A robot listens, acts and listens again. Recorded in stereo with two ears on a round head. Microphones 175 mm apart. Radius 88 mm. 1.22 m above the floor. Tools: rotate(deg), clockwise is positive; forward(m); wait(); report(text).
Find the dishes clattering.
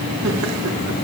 wait()
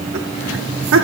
wait()
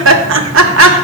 report("I can't make out dishes clattering, only laughter.")